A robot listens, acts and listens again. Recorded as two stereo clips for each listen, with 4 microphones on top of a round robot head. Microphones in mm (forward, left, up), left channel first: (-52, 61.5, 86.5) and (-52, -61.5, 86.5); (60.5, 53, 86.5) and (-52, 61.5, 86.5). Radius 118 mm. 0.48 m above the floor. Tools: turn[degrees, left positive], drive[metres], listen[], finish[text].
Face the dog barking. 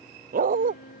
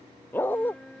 Thought: The dog barking: 80° right.
Action: turn[-80]
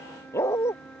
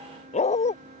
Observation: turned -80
Thought: The dog barking is now 15° left.
Action: turn[15]
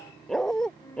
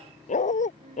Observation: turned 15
Action: finish[Facing the dog barking.]